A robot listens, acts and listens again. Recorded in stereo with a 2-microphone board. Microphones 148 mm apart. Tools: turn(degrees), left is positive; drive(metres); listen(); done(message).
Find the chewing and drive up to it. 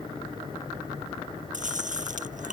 turn(degrees=-60)
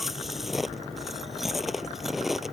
drive(metres=1.0)
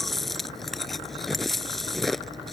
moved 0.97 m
drive(metres=1.0)
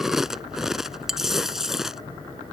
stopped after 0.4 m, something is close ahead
done("Arrived at the chewing, straight ahead.")